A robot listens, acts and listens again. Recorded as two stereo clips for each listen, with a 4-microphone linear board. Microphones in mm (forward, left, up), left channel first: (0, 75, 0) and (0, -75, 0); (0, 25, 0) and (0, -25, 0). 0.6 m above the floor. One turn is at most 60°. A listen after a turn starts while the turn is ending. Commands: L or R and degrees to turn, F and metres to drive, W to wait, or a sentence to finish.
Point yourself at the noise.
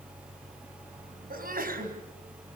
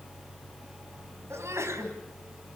R60
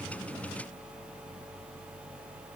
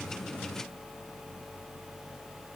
W
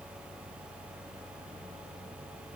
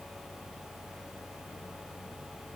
I heard a sneeze, but can't make it out now. It was about 10° right or 50° right.